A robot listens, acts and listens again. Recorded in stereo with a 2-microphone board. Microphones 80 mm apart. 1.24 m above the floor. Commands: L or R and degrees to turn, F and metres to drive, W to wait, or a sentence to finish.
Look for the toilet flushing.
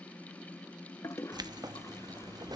L35
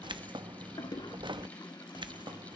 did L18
L125
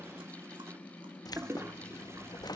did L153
R30
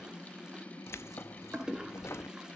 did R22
Found it: a toilet flushing, straight ahead.